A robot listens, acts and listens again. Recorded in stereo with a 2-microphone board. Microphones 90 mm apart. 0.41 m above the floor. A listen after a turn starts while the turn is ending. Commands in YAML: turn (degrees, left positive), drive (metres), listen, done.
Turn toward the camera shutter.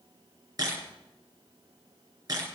turn: -45
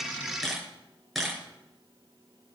done: "Facing the camera shutter, over 4 m away."